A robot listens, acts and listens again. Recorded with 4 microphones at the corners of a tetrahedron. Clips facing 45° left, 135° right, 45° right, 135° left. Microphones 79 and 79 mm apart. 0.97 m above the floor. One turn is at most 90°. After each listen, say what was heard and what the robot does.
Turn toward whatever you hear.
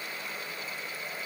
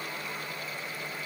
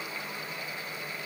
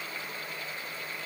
Keep listening.
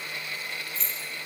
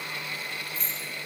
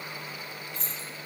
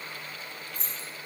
The keys jangling: 60° left. Turn 60° left.
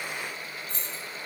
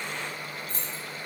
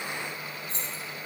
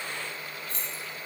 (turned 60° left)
The keys jangling is now 15° left. Turn 15° left.
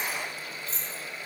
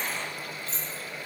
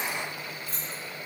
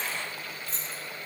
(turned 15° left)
Facing the keys jangling.